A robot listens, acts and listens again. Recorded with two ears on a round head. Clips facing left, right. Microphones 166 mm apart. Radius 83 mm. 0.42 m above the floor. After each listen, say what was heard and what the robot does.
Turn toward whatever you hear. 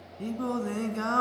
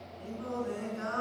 Turn 90° left.
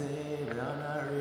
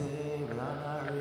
So it is at 10° left. Turn 10° left.
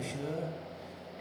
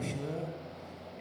Found it: singing, straight ahead.